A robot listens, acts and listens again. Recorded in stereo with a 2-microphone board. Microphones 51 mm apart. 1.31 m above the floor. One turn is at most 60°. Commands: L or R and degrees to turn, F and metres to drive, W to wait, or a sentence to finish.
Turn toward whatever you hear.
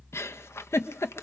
L60
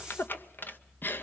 L45
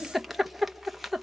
Facing the giggle, under 1 m away.